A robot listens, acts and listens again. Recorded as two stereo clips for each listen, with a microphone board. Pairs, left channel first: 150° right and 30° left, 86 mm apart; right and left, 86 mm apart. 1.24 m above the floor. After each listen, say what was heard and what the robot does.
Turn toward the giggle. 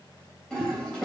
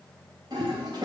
Keep listening.
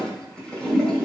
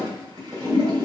Keep listening.
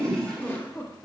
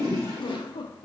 The giggle: 85° right. Turn 85° right.
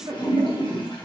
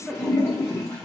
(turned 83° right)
Keep listening.
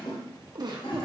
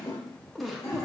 Found it: a giggle, straight ahead, 1 to 2 m away.